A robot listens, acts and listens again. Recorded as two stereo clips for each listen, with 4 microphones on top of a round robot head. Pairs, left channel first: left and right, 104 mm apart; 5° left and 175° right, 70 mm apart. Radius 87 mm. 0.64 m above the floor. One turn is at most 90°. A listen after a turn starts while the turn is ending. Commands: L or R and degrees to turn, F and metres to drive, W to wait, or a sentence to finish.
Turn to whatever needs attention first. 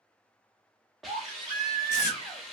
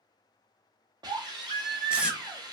R90
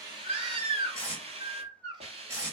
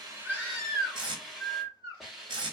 R50
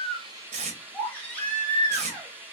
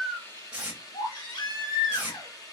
L15
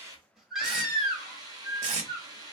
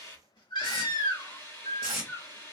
Facing the baby crying, 1 to 2 m away.